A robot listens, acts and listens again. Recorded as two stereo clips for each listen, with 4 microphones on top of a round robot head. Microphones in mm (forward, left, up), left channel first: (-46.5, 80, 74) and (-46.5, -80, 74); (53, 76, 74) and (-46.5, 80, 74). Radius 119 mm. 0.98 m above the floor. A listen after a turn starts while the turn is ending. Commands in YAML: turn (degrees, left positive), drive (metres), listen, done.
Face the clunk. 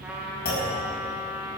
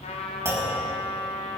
turn: 115
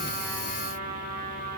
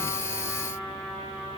done: "Facing where the clunk came from. I can't hear it now."